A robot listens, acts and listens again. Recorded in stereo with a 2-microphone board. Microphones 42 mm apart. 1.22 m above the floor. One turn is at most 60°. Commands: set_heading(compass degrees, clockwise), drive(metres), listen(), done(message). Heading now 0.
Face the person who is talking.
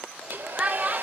set_heading(20)
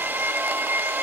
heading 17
listen()
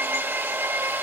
listen()
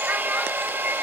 done("I heard a child speaking, but can't make it out now. It was about 5° right or 145° right.")